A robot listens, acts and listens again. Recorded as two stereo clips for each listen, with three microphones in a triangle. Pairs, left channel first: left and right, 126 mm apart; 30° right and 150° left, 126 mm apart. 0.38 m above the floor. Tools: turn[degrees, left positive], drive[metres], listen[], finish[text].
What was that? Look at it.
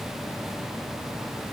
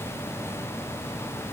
Action: listen[]
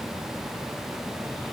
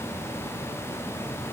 Action: listen[]
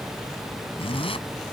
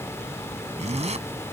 Thought: The zipper: 130° left.
Action: turn[130]
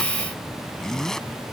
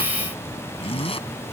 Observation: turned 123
Action: finish[Facing the zipper.]